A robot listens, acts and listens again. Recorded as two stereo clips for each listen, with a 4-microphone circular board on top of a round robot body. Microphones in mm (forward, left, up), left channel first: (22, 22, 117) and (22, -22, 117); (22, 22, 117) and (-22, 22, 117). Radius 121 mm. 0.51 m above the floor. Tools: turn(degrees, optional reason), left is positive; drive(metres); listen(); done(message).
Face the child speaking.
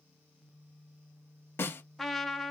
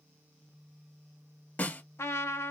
listen()
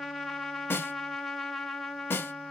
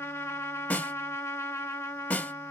listen()
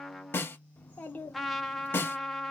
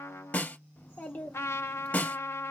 turn(degrees=45, reason="The child speaking: 45° left.")
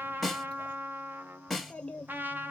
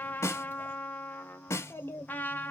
turn(degrees=10, reason="The child speaking is now 10° left.")
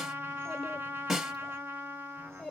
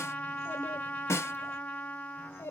done("Facing the child speaking.")